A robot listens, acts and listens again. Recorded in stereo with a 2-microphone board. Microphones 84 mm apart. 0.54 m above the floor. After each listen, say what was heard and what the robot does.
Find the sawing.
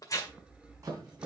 Turn 30° right.
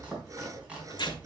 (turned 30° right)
So it is at 135° right. Turn 135° right.
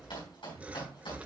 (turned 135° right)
The sawing is now 15° right. Turn 15° right.
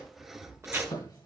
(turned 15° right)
Facing the sawing, 1 to 2 m away.